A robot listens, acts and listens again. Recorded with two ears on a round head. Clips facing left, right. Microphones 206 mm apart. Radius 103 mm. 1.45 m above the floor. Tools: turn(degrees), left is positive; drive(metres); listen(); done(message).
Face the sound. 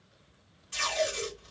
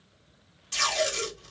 turn(degrees=-60)
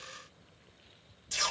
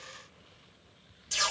done("Found it: tape being pulled, straight ahead, 1 to 2 m away.")